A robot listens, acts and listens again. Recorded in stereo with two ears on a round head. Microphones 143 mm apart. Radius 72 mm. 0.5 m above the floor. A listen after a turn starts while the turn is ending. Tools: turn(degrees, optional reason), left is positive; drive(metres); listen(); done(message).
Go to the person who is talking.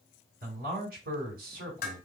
turn(degrees=-65, reason="The man speaking: about 65° right or 115° right.")
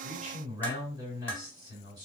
turn(degrees=-30, reason="So it is at 30° right.")
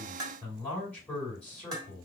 turn(degrees=10, reason="The man speaking is now 10° left.")
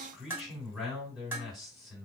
drive(metres=1.0)
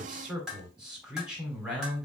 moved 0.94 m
drive(metres=1.0)
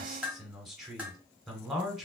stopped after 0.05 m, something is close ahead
done("Arrived at the man speaking, straight ahead.")